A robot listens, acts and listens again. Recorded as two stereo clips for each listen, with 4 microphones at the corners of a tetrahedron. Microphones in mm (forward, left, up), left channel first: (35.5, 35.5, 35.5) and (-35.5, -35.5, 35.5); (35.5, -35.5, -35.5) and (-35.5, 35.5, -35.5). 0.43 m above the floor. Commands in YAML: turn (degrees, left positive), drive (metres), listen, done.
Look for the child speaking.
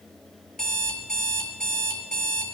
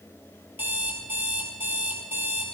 listen: true
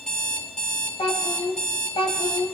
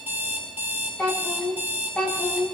turn: 35
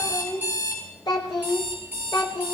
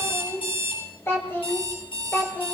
turn: 25
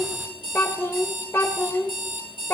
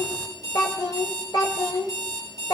turn: -15
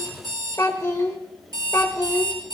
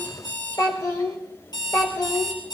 done: "Found it: a child speaking, straight ahead, 1 to 2 m away."